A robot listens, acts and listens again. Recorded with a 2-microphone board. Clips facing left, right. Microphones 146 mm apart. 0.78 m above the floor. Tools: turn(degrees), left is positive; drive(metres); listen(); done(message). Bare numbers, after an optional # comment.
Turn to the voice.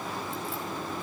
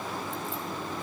listen()
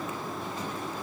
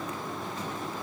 listen()
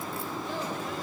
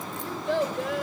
turn(-90)
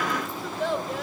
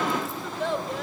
done("Facing the child speaking, 2 to 4 m away.")